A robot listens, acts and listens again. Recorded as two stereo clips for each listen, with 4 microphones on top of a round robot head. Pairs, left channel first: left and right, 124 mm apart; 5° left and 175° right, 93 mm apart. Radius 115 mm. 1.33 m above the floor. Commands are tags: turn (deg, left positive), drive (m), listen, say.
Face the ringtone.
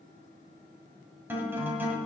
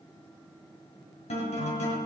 <listen/>
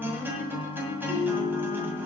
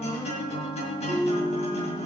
<turn deg="135"/>
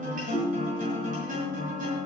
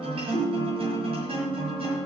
<turn deg="25"/>
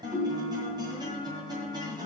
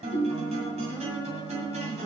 <say>Found it: a ringtone, straight ahead.</say>